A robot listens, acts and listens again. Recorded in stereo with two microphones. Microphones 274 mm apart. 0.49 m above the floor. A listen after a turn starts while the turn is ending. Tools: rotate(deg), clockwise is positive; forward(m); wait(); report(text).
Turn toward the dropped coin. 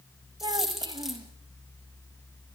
rotate(-30)
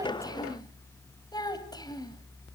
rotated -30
wait()
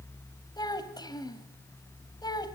report("I heard a dropped coin, but can't make it out now. It was about 30° right or 150° left.")